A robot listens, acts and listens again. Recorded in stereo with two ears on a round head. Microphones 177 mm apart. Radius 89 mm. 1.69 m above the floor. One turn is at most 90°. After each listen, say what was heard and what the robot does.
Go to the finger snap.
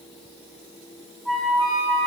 Keep listening.
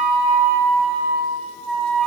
Keep listening.
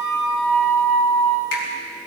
The finger snap: about 60° left or 120° left. Turn 60° left.
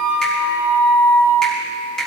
Drive 1.0 m forward.
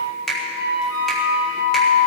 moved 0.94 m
Drive 1.0 m forward.
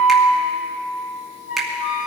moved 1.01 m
Drive 1.0 m forward.
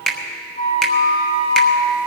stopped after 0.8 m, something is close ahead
I am next to the finger snap.